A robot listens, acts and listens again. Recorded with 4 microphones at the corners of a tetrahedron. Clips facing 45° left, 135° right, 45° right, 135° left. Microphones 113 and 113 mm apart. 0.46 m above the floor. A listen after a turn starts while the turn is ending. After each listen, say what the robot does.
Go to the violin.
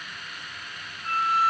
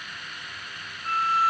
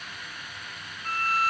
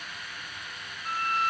Turn 95° right.
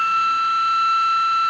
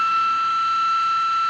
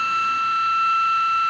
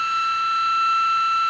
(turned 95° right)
Turn 35° right.
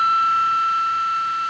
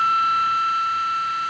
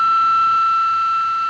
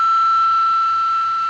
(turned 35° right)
Drive 1.0 m forward.
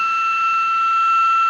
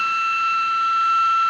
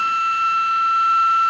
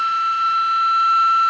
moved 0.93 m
Drive 1.0 m forward.
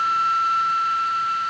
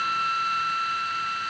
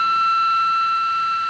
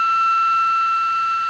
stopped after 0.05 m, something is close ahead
Turn 10° left.
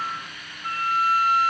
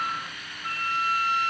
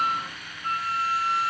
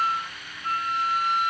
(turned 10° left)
I am next to the violin.